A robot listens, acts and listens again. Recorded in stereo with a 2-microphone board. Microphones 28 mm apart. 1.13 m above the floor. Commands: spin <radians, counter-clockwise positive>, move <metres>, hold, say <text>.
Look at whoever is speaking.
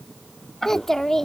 spin 0.52
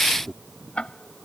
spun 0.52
spin -0.35
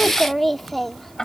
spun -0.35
say Found it: a child speaking, straight ahead.